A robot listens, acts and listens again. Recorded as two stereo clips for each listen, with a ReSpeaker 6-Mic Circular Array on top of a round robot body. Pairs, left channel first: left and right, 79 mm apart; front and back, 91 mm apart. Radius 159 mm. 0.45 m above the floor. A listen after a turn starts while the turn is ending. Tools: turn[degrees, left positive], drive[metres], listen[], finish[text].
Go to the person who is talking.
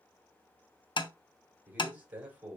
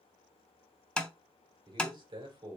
Thought: The man speaking: 160° right.
Action: turn[-160]
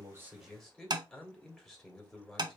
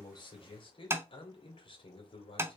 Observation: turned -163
Action: drive[1.0]
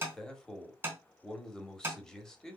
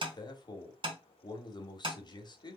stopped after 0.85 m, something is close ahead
Thought: The man speaking is now 10° left.
Action: turn[10]
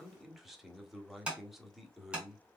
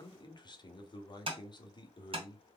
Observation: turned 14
Action: finish[Arrived at the man speaking, straight ahead.]